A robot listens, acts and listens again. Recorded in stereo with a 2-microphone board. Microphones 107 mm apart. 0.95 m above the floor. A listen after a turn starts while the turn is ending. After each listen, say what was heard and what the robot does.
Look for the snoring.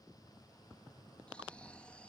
Turn 30° left.
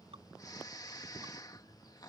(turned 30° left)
So it is at 140° left. Turn 140° left.
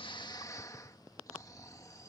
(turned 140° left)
The snoring is now 35° left. Turn 35° left.
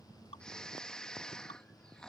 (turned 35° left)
The snoring is now 10° left. Turn 10° left.
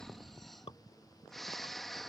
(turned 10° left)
Facing the snoring.